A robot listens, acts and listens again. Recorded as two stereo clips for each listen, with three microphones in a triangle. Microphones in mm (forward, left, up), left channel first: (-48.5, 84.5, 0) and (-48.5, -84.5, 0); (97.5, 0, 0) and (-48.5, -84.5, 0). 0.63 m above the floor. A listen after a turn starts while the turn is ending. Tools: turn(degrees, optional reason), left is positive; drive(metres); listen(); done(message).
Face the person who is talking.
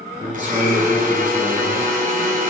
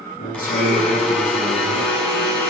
turn(degrees=-10, reason="The man speaking: 10° right.")
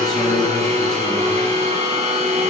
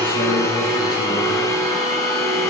listen()
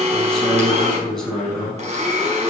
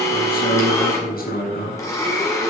done("Found it: a man speaking, straight ahead.")